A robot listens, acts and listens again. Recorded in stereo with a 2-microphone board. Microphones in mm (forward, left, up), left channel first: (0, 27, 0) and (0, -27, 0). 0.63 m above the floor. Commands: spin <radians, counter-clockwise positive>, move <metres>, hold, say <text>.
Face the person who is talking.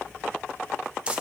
hold
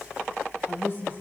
spin 0.79
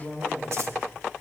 say Found it: a woman speaking, straight ahead, over 4 m away.